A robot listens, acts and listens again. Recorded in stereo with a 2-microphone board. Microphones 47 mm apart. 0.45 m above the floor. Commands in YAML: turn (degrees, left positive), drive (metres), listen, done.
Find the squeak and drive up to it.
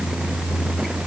listen: true
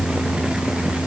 listen: true
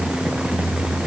done: "I can't make out a squeak."